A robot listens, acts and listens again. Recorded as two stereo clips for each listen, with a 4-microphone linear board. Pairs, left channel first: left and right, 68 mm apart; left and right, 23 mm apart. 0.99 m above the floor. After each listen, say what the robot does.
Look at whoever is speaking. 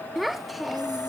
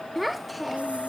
Turn 30° left.
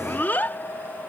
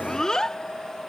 Turn 155° left.
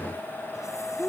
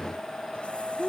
Turn 30° left.
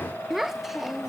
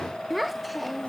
Found it: a child speaking, straight ahead.